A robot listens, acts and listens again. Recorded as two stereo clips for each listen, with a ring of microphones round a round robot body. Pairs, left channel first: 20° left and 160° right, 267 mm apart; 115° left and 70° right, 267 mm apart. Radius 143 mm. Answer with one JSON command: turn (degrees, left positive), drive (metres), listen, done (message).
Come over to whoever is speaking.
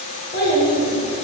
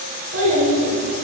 {"turn": -30}
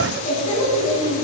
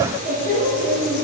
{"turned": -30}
{"drive": 1.0}
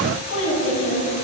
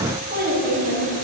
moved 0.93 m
{"turn": -15}
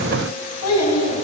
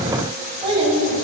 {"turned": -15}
{"drive": 1.0}
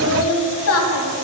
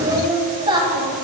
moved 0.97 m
{"drive": 1.0}
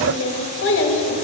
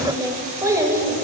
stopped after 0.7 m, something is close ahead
{"turn": 10}
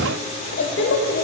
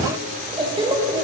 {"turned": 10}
{"done": "Arrived at the child speaking, straight ahead."}